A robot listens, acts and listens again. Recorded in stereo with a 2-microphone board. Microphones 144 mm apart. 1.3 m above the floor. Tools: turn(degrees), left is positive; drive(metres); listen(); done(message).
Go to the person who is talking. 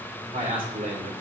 turn(degrees=-70)
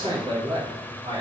turn(degrees=-35)
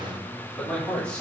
drive(metres=1.0)
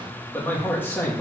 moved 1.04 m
turn(degrees=15)
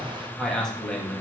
drive(metres=1.0)
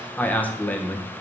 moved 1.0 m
turn(degrees=10)
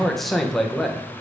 drive(metres=1.0)
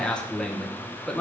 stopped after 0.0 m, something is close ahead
done("I am next to the man speaking.")